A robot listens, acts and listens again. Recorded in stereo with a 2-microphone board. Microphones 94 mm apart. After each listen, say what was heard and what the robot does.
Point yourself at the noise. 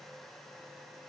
Keep listening.
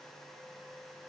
Keep listening.
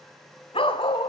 The dog barking: about 65° left or 115° left. Turn 65° left.
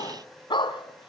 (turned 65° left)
So it is at 60° left. Turn 60° left.
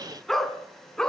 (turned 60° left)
The dog barking is now 10° left. Turn 10° left.
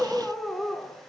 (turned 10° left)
Found it: a dog barking, straight ahead.